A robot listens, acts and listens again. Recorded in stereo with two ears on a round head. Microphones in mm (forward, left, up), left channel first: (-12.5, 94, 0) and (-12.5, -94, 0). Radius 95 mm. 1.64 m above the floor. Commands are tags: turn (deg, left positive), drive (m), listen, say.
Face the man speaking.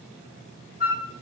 <listen/>
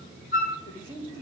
<turn deg="25"/>
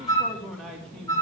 <say>Facing the man speaking.</say>